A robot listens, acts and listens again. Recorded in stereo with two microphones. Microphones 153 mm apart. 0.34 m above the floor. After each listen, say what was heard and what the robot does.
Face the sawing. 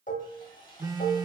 The sawing: about 30° left or 150° left. Turn 30° left.
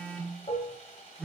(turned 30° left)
So it is at 115° left. Turn 115° left.
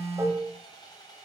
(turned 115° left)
The sawing is now 30° left. Turn 30° left.
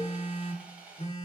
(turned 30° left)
The sawing is now 10° right. Turn 10° right.
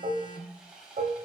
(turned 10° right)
Facing the sawing, 1 to 2 m away.